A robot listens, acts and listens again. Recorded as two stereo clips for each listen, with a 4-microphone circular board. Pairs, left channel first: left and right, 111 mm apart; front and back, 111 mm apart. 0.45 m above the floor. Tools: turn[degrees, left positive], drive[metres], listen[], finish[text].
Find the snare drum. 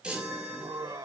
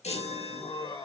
Action: listen[]
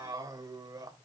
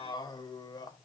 Action: listen[]
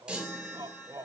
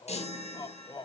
Action: finish[I can't make out a snare drum, only a chime and laughter.]